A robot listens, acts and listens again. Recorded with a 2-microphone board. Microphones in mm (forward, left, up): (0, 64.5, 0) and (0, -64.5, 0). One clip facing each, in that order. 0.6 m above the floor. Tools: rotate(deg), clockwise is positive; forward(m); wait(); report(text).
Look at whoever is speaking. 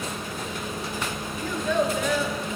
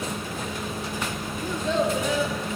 rotate(25)
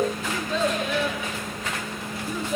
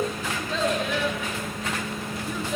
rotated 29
report("Found it: a child speaking, straight ahead.")